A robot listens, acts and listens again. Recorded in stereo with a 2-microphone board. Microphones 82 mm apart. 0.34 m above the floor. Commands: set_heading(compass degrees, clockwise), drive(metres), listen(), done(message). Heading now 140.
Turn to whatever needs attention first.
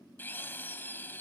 listen()
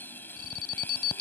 set_heading(80)
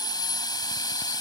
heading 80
listen()
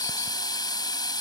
listen()
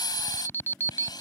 set_heading(50)
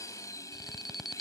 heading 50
done("Found it: an alarm, straight ahead.")